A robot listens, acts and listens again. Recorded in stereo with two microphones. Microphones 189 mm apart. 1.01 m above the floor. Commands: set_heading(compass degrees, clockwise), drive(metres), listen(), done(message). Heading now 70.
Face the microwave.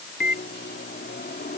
set_heading(10)
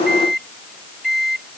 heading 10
done("Found it: a microwave, straight ahead.")